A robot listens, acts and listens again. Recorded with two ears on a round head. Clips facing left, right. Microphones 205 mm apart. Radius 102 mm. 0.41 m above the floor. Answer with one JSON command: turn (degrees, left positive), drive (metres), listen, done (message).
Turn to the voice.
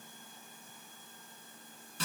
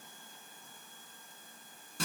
{"listen": true}
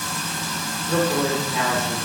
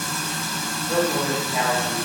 {"turn": -35}
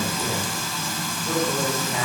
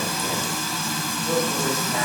{"turn": -10}
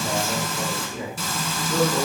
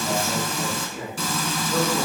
{"done": "Found it: a woman speaking, straight ahead, 1 to 2 m away."}